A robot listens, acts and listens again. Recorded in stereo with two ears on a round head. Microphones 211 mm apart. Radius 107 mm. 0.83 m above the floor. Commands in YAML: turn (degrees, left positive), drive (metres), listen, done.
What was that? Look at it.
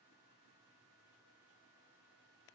listen: true
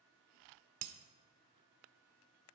turn: -75
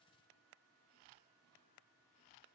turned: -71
listen: true
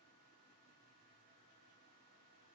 done: "I heard breaking glass, but can't make it out now. It was about 5° right or 35° right."